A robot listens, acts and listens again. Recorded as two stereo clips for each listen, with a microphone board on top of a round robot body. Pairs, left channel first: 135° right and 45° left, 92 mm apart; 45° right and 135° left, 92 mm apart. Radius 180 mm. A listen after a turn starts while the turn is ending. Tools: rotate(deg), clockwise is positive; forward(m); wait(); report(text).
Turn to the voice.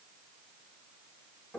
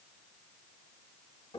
wait()
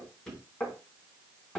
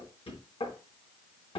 wait()
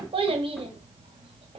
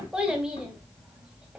rotate(-55)
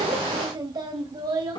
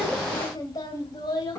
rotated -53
report("Found it: a child speaking, straight ahead, 2 to 4 m away.")